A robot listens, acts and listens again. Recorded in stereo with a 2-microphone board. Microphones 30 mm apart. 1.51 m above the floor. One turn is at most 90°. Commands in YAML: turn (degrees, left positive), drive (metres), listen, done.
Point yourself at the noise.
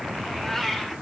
turn: 30
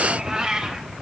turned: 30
turn: -25
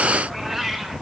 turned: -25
turn: -10
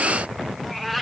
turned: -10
done: "Found it: a cat meowing, straight ahead."